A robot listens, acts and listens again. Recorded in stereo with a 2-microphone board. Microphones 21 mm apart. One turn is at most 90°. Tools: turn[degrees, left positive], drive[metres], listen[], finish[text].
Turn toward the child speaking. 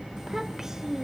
Thought: The child speaking: about 25° right or 155° right.
Action: turn[-25]
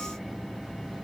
Action: listen[]
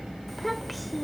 Action: finish[Facing the child speaking, under 1 m away.]